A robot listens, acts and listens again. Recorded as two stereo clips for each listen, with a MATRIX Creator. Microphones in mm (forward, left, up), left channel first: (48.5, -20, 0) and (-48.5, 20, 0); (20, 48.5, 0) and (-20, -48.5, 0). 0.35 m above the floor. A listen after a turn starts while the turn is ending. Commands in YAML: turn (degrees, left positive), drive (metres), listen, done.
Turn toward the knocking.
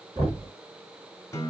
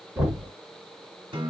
turn: 180
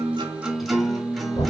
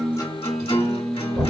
turn: -35
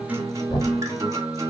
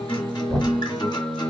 done: "Found it: knocking, straight ahead."